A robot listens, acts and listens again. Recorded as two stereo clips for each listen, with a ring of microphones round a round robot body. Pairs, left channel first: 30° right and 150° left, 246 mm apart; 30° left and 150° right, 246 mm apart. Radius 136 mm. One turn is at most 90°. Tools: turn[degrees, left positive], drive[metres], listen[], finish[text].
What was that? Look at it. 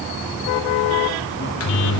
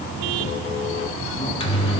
Thought: The microwave: 35° right.
Action: turn[-35]
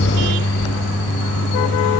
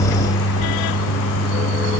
Action: finish[Facing the microwave, 1 to 2 m away.]